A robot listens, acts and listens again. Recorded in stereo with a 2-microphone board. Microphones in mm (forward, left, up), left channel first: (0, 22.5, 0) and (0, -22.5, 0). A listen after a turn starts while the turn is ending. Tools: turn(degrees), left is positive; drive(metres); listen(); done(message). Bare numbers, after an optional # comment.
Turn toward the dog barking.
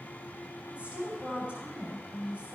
listen()
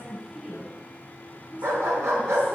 turn(-90)
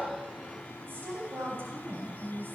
listen()
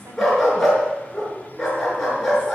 done("Found it: a dog barking, straight ahead.")